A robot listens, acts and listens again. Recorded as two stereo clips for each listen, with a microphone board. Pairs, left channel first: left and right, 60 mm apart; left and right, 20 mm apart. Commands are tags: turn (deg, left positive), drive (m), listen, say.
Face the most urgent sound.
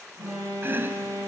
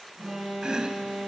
<turn deg="-75"/>
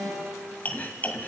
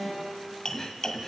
<turn deg="-30"/>
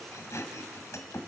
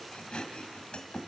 <listen/>
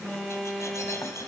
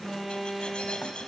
<turn deg="10"/>
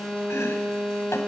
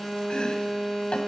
<say>Found it: an alarm, straight ahead.</say>